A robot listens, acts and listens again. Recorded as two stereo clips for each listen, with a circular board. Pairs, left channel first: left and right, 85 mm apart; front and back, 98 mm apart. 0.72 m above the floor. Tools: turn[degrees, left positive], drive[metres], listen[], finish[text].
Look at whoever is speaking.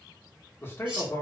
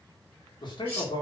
Thought: The man speaking: 30° left.
Action: turn[30]
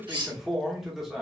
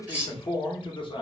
Action: finish[Found it: a man speaking, straight ahead, 1 to 2 m away.]